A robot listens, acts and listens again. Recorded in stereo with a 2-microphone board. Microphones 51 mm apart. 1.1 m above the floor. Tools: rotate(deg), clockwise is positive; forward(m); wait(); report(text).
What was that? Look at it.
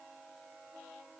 wait()
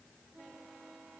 wait()
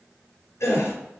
rotate(-70)
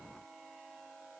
wait()
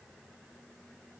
report("I heard a gasp, but can't make it out now. It was about straight ahead or 40° left.")